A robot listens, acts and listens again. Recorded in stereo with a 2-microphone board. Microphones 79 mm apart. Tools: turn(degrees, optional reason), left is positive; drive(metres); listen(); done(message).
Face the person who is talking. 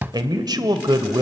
turn(degrees=-65, reason="The man speaking: about 65° right or 115° right.")
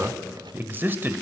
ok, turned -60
turn(degrees=-30, reason="So it is at 30° right.")
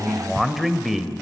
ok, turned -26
done("Found it: a man speaking, straight ahead, 1 to 2 m away.")